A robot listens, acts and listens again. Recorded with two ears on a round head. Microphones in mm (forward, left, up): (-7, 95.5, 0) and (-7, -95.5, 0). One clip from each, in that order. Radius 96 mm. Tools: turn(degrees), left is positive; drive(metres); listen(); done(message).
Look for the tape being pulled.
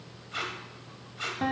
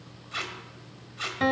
turn(degrees=-25)
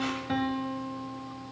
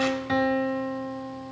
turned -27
listen()
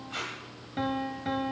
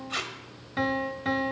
turn(degrees=-130)
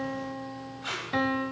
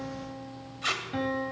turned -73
turn(degrees=-55)
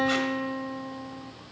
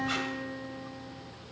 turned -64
listen()
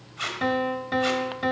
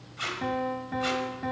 done("Facing the tape being pulled, 1 to 2 m away.")